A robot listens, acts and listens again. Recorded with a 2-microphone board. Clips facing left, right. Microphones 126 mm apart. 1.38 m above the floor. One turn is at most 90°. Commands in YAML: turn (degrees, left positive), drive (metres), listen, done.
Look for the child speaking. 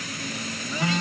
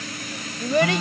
turn: -75
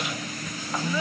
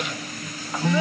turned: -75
listen: true
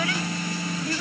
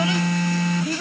turn: -20
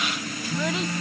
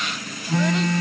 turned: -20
listen: true
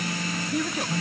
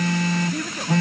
done: "Facing the child speaking."